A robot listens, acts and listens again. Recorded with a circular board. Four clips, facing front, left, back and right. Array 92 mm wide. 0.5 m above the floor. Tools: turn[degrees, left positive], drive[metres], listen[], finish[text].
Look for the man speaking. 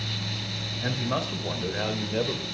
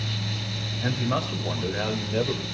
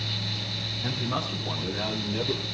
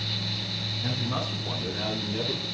Thought: The man speaking: 60° left.
Action: turn[60]
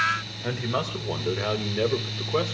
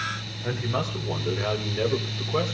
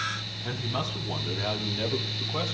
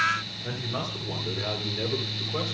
Thought: The man speaking is now 30° left.
Action: turn[30]
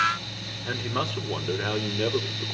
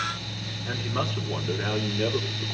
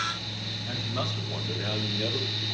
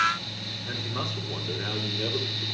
Action: listen[]
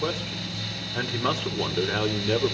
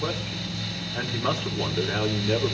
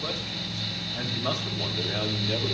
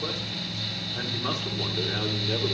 Thought: The man speaking is now 20° left.
Action: turn[20]
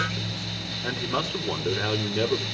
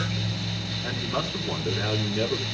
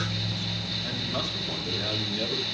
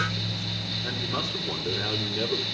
Action: finish[Found it: a man speaking, straight ahead.]